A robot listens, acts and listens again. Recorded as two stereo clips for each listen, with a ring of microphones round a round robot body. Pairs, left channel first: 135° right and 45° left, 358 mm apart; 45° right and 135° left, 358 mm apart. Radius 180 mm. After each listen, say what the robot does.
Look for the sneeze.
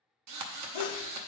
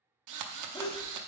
Turn 125° right.
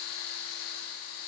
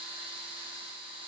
Facing where the sneeze came from. I can't hear it now.